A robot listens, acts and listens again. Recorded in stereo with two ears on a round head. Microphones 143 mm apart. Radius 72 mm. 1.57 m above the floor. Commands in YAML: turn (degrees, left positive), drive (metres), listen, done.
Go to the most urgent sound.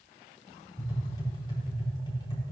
listen: true
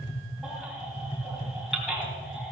turn: -30
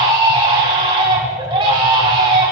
turn: -145
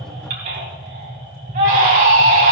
turn: -60
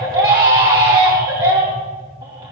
turn: -30
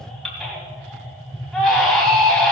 drive: 1.0
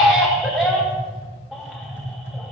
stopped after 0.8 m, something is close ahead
done: "Blocked. The baby crying is further on, straight ahead."